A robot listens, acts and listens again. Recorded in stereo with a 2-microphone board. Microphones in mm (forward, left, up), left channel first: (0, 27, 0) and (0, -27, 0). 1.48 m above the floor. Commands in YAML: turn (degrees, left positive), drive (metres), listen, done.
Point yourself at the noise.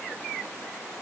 listen: true
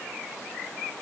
listen: true
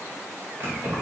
turn: -50
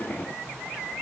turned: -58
listen: true
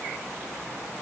listen: true
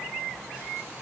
done: "I heard keys jangling, but can't make it out now. It was about 10° left or 75° right."